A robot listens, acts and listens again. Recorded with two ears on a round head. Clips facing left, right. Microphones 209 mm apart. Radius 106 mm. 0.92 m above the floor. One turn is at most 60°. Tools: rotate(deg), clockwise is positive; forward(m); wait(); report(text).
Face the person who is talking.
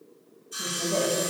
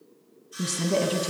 rotate(45)
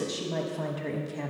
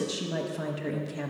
rotate(10)
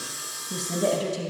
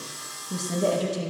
report("Found it: a woman speaking, straight ahead.")